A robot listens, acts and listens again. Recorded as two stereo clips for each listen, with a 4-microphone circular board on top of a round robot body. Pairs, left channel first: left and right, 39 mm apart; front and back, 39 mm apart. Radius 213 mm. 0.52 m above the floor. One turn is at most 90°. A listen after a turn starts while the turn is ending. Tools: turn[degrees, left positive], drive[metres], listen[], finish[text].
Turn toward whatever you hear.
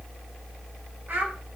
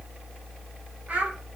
Thought: The child speaking: 125° right.
Action: turn[-90]
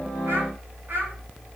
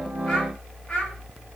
Thought: The child speaking is now 65° right.
Action: turn[-65]
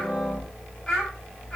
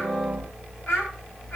Thought: The child speaking is now 20° left.
Action: turn[20]
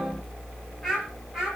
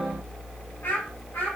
Action: finish[Facing the child speaking, over 4 m away.]